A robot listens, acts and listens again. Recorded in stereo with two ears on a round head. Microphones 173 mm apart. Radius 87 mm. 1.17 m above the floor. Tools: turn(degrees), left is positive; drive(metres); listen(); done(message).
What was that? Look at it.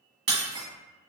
turn(degrees=-35)
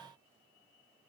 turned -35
listen()
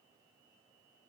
done("I heard breaking glass, but can't make it out now. It was about straight ahead or 110° right.")